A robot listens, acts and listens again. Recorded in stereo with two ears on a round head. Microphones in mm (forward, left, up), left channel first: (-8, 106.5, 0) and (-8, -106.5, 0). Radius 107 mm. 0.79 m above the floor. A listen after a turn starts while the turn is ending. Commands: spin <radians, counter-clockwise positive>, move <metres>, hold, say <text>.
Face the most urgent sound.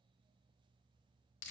hold
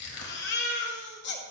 spin 0.87
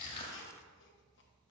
hold
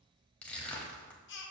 spin 1.22
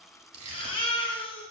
spin 0.44
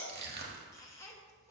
spin 0.26
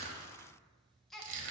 say Facing the baby crying, under 1 m away.